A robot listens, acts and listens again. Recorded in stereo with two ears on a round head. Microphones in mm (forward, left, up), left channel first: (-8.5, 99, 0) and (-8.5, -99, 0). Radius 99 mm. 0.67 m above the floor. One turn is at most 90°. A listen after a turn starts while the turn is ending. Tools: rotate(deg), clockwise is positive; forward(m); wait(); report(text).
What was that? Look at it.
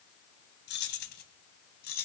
rotate(-50)
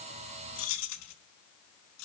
rotate(-85)
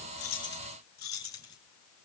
rotate(-20)
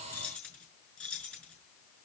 report("Facing the keys jangling, over 4 m away.")